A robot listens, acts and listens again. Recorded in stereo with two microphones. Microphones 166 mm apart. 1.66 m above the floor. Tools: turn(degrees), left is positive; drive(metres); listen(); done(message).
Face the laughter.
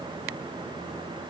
listen()
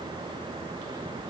listen()
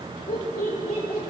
turn(degrees=65)
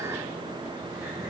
listen()
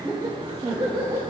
turn(degrees=-35)
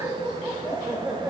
turn(degrees=-10)
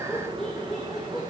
done("Facing the laughter.")